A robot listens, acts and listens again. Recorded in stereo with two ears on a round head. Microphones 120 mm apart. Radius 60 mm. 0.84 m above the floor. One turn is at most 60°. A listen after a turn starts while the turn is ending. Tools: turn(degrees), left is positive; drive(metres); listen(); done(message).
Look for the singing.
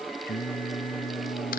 turn(degrees=60)
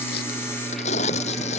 listen()
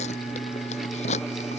turn(degrees=25)
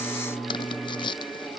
turn(degrees=10)
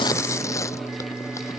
done("Facing the singing.")